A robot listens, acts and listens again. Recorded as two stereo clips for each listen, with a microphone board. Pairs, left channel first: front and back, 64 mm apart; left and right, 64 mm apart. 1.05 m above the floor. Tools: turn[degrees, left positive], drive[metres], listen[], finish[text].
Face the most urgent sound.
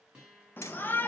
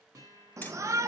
Thought: The shout: 55° right.
Action: turn[-55]
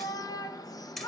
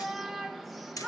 Action: finish[Found it: a shout, straight ahead.]